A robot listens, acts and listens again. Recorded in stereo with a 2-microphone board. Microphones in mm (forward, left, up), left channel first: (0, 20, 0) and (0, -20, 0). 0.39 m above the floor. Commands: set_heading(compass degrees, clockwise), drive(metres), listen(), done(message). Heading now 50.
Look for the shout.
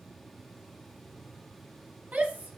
set_heading(90)
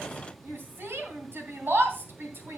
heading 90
set_heading(185)
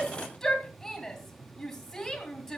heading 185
set_heading(175)
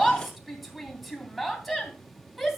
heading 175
done("Facing the shout.")